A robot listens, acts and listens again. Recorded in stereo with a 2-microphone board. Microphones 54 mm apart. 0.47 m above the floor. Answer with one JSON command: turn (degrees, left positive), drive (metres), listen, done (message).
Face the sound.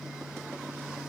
{"listen": true}
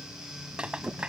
{"turn": -15}
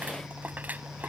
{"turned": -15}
{"listen": true}
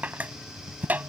{"turn": -150}
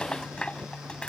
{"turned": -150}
{"turn": 20}
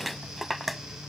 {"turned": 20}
{"done": "Found it: a rattle, straight ahead."}